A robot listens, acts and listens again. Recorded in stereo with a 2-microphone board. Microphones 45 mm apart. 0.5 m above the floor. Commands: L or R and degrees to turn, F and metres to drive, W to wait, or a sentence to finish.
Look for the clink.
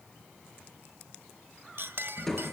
R55
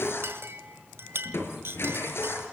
R65
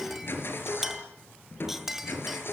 Facing the clink.